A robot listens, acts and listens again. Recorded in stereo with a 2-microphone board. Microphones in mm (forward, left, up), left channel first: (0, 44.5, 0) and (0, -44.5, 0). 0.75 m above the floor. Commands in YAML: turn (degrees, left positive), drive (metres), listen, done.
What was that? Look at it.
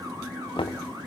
turn: 75
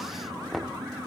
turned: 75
done: "Found it: knocking, straight ahead."